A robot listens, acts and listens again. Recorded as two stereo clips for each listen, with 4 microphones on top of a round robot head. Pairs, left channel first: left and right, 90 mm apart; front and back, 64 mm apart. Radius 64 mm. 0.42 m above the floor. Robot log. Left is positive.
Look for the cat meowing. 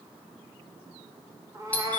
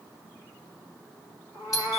note: The cat meowing: 40° right.
cmd yaw -40
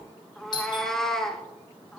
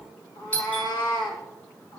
end: Facing the cat meowing, 2 to 4 m away.